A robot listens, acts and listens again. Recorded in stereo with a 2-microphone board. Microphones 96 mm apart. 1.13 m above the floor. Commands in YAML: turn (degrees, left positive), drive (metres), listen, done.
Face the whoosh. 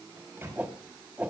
turn: -15
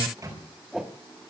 done: "Found it: a whoosh, straight ahead, 1 to 2 m away."